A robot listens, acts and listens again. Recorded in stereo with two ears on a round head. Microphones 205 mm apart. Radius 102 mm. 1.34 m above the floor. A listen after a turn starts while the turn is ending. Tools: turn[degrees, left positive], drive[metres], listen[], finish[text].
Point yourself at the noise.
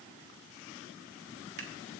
Thought: The scissors: about 45° right or 135° right.
Action: turn[-45]
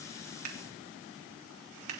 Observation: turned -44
Thought: So it is at 90° right.
Action: turn[-90]
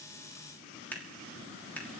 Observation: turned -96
Thought: The scissors is now 10° left.
Action: turn[10]
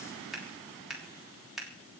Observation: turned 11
Action: finish[Found it: scissors, straight ahead.]